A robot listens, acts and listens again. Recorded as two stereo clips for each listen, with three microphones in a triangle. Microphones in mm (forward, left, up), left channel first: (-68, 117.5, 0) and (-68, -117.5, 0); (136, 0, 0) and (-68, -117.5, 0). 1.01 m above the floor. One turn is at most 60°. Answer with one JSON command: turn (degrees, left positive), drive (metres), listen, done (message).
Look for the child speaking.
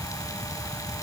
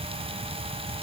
{"listen": true}
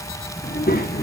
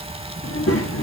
{"turn": 40}
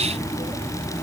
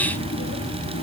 {"turn": 10}
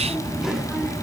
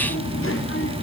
{"done": "Found it: a child speaking, straight ahead."}